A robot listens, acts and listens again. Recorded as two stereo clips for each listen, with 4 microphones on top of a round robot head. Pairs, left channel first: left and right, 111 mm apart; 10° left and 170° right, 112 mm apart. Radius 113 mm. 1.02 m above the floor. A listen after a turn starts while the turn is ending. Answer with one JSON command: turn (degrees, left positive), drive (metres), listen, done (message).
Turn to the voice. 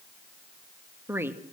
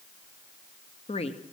{"turn": -20}
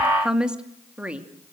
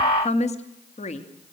{"turn": -10}
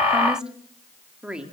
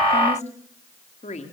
{"turn": -10}
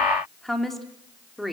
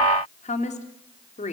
{"done": "Facing the woman speaking."}